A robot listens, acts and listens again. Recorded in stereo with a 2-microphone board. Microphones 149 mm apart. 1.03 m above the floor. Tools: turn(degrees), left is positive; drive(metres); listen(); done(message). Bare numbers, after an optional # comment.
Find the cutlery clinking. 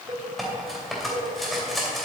turn(30)
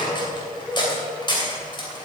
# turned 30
# So it is at 150° left.
turn(150)
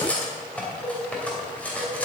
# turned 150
# The cutlery clinking is now 10° left.
turn(10)
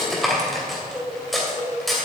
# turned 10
done("Found it: cutlery clinking, straight ahead, 2 to 4 m away.")